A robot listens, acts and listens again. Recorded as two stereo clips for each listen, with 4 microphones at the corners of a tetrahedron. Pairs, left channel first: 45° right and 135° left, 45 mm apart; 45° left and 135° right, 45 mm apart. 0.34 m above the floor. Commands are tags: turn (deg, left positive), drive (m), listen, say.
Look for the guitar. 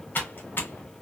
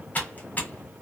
<listen/>
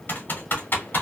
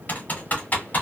<listen/>
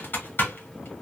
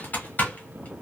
<say>I can't make out a guitar, only typing on a keyboard.</say>